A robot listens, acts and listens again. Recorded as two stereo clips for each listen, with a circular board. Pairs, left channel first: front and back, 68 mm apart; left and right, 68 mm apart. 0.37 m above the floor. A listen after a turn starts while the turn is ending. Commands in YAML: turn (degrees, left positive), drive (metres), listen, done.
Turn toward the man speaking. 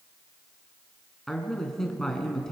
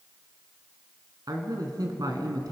turn: -85
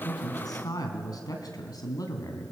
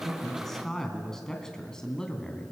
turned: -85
turn: 15
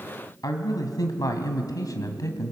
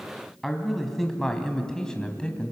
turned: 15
turn: 15
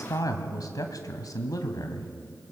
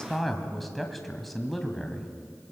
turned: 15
done: "Found it: a man speaking, straight ahead."